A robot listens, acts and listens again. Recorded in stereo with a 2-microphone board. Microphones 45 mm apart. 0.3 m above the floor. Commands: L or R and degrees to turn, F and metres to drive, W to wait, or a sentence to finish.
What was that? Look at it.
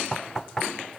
L30
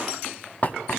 L140
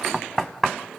Found it: knocking, straight ahead.